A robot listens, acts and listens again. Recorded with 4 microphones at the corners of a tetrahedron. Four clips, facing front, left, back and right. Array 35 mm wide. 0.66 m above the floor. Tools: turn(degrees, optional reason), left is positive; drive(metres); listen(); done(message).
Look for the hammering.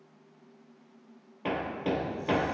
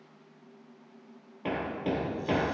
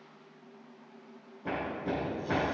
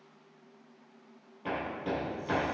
turn(degrees=30, reason="The hammering: 30° left.")
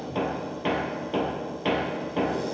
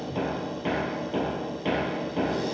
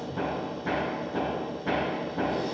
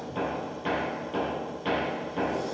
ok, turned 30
turn(degrees=10, reason="The hammering is now 10° left.")
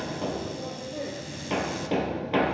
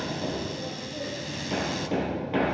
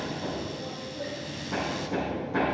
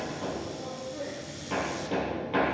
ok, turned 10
done("Facing the hammering, 2 to 4 m away.")